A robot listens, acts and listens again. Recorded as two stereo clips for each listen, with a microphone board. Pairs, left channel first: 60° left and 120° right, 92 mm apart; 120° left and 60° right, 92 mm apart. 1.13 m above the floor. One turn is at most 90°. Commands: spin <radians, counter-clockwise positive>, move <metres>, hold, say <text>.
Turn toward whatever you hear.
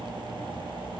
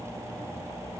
hold
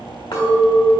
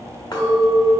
spin 1.48
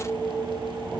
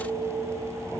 say Facing the clink.